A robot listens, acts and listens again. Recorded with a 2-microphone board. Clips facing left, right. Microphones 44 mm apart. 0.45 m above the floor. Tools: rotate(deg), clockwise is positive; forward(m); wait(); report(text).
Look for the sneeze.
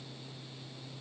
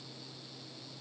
wait()
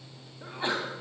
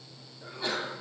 rotate(-30)
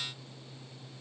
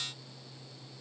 wait()
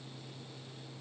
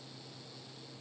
report("I heard a sneeze, but can't make it out now. It was about straight ahead or 120° left.")